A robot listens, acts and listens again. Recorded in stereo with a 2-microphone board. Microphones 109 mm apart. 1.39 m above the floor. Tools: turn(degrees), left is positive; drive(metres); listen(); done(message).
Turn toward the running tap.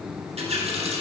turn(degrees=-75)
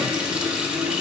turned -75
turn(degrees=-10)
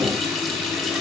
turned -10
done("Found it: a running tap, straight ahead.")